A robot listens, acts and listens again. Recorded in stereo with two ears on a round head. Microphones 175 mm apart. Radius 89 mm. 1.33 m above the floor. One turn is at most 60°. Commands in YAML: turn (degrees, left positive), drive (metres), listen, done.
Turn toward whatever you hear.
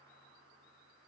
listen: true
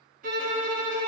turn: -40
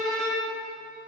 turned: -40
done: "Found it: a violin, straight ahead, 1 to 2 m away."